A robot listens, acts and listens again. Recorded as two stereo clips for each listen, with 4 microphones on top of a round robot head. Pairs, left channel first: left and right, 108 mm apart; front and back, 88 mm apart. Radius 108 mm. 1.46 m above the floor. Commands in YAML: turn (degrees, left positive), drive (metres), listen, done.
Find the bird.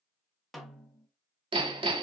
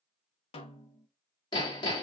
listen: true
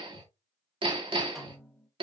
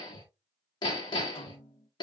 listen: true
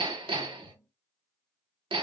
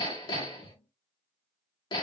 done: "I can't make out a bird, only hammering and a snare drum."